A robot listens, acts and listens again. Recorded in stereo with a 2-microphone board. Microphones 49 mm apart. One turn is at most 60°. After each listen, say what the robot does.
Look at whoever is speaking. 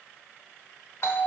Keep listening.
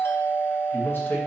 Turn 40° left.
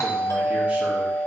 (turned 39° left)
Keep listening.
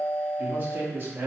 Turn 50° right.
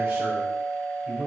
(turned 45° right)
Turn 15° right.
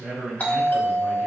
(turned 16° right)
Facing the man speaking.